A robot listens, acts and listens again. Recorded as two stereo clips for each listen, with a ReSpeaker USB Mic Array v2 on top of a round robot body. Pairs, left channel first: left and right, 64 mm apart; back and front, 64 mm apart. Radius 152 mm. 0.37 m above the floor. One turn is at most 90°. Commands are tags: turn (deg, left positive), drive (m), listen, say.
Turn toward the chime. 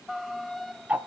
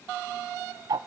<listen/>
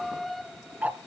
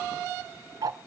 <listen/>
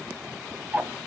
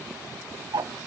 <say>I can't make out a chime to turn to.</say>